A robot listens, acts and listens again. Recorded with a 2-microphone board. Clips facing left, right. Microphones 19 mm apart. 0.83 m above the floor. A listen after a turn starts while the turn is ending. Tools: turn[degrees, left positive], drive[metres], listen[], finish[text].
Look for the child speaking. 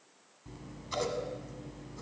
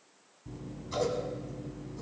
Action: listen[]
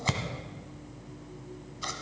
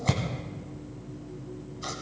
Action: listen[]
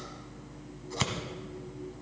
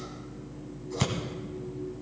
Action: finish[I can't make out a child speaking to turn to.]